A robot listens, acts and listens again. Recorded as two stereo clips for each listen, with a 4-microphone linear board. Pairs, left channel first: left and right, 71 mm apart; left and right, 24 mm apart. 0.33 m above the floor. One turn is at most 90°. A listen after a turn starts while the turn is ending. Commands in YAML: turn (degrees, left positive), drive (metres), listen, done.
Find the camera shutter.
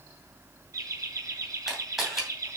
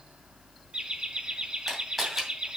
turn: -30
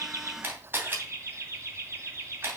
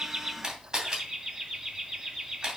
turn: -90
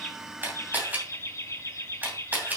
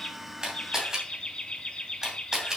turn: -30
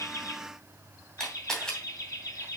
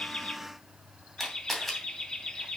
turn: 10
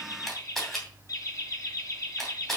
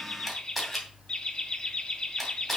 done: "Found it: a camera shutter, straight ahead."